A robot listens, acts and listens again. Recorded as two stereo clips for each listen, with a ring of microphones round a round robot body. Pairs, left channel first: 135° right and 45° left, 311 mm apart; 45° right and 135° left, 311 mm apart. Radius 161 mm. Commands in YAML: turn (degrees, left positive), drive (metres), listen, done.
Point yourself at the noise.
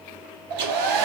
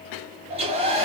turn: 65
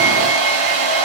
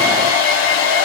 done: "Facing the hair dryer, under 1 m away."